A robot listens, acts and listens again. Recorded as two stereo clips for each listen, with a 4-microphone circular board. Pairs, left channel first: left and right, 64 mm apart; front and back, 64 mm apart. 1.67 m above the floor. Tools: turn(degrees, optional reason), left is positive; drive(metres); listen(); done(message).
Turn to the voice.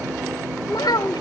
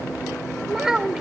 turn(degrees=100, reason="The child speaking: 100° left.")
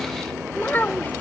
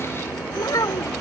turn(degrees=30, reason="The child speaking is now 30° left.")
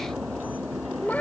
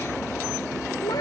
turn(degrees=25, reason="The child speaking is now 25° left.")
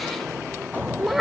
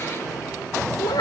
done("Found it: a child speaking, straight ahead.")